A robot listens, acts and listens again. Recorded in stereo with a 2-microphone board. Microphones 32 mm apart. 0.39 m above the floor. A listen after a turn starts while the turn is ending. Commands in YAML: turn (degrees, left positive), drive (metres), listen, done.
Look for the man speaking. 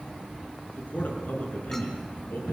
turn: 65
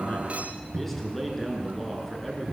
turn: 10
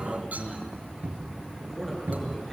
done: "Found it: a man speaking, straight ahead."